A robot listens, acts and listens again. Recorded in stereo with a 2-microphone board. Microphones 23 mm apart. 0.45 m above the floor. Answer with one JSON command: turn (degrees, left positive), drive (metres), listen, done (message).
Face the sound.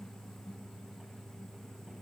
{"listen": true}
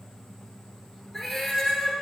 {"turn": 30}
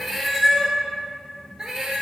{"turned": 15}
{"turn": -35}
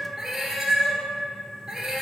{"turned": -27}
{"turn": -20}
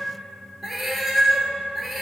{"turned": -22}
{"done": "Found it: a cat meowing, straight ahead, 1 to 2 m away."}